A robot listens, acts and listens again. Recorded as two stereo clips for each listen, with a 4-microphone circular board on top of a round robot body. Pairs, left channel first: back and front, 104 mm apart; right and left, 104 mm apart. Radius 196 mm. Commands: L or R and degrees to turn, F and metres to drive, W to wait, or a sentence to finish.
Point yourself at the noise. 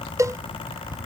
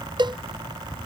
L55
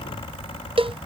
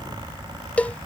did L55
R15
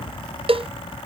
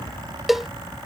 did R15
Found it: a cowbell, straight ahead.